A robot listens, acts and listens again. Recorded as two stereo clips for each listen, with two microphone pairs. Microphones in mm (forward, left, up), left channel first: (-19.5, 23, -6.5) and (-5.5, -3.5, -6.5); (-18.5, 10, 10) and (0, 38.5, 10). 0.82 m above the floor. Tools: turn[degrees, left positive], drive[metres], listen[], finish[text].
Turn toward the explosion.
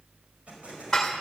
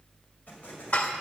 Thought: The explosion: 95° right.
Action: turn[-95]
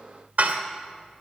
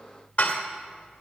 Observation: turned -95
Action: finish[I heard an explosion from this way, but can't make it out now.]